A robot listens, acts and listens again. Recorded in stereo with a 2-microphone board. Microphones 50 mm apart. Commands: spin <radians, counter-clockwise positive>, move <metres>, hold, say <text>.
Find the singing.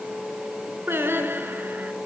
spin -0.87
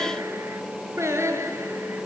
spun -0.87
spin -1.31
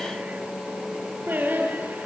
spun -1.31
spin -0.79
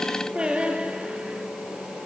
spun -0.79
spin -0.35
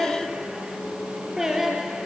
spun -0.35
spin -0.17
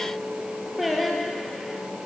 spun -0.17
say Facing the singing.